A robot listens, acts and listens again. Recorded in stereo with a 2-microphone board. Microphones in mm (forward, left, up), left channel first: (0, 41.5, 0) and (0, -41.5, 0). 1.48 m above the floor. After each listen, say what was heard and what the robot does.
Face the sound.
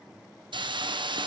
The hiss: about 70° right or 110° right. Turn 70° right.
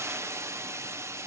So it is at 35° right. Turn 35° right.
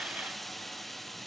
Found it: a hiss, straight ahead, 1 to 2 m away.